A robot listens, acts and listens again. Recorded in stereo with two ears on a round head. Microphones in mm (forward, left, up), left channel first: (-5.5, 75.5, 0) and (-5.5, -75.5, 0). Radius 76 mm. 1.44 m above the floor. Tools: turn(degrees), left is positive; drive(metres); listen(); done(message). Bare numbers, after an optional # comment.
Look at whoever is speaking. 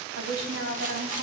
turn(-90)
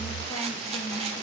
listen()
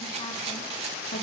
listen()
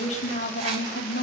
# The woman speaking is now 55° left.
turn(55)
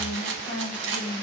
# The woman speaking is now 30° left.
turn(30)
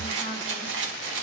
listen()
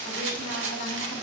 listen()
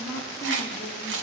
# The woman speaking is now 20° left.
turn(20)
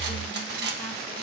listen()
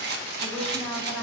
done("Found it: a woman speaking, straight ahead.")